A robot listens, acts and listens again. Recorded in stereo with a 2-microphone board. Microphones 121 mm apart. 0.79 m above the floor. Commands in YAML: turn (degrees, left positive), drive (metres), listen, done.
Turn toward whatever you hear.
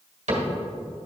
turn: -75
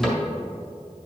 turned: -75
done: "Found it: a cupboard door, straight ahead."